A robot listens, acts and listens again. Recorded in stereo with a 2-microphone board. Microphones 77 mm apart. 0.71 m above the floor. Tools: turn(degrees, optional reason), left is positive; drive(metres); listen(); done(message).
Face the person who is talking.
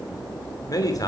turn(degrees=45, reason="The man speaking: about 45° left or 135° left.")
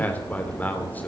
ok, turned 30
turn(degrees=20, reason="So it is at 20° left.")
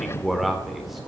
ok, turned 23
done("Found it: a man speaking, straight ahead.")